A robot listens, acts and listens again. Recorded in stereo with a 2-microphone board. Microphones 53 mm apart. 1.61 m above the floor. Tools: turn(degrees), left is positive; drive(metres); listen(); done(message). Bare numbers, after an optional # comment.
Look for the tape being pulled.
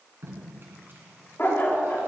# The tape being pulled: about 45° right or 135° right.
turn(-45)
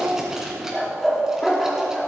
listen()
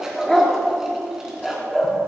listen()
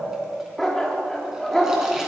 done("I heard tape being pulled, but can't make it out now. It was about straight ahead or 90° right.")